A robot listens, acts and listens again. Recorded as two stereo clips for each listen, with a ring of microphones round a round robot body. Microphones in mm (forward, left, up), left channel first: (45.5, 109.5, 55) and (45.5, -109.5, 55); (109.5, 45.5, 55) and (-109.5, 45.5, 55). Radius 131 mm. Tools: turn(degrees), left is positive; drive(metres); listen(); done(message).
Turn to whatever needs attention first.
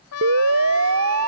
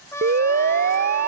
turn(degrees=-125)
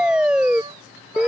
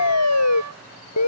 done("Found it: a siren, straight ahead.")